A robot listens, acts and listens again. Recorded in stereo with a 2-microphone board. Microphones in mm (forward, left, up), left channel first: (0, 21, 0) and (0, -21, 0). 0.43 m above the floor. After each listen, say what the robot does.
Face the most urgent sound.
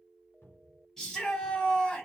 Turn 30° left.
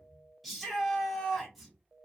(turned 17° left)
Found it: a shout, straight ahead, 1 to 2 m away.